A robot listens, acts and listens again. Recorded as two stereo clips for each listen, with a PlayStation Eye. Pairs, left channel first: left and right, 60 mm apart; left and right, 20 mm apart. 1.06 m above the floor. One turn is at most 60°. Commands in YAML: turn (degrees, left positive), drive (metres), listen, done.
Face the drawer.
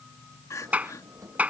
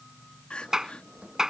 turn: -60
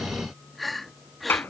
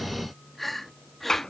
turn: -45
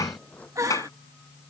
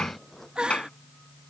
turn: 25
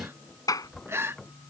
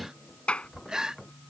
done: "Facing the drawer."